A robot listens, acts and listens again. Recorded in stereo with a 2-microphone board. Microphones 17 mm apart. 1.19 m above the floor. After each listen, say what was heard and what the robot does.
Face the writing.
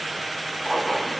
The writing: about 50° left or 130° left. Turn 50° left.
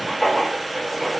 So it is at 70° left. Turn 70° left.
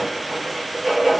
The writing is now 10° right. Turn 10° right.
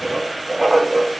Found it: writing, straight ahead.